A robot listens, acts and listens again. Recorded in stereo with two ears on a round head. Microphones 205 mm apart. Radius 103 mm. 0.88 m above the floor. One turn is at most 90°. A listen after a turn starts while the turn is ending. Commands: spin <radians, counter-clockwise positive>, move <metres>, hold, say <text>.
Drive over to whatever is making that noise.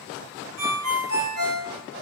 spin -1.22
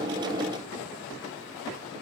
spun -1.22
hold
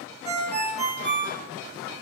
spin -0.61
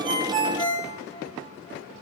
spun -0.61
move 1.0
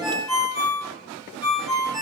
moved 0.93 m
move 1.0
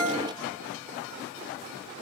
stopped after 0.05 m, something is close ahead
spin -0.17
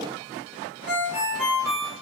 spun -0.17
say Arrived at the ringtone, straight ahead.